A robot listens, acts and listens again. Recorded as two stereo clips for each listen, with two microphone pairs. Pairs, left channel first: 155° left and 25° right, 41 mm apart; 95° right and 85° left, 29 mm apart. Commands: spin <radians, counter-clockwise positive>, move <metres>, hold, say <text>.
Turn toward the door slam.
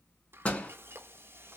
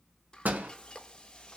spin 1.66
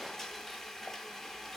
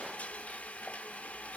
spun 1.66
say I heard a door slam from this way, but can't make it out now.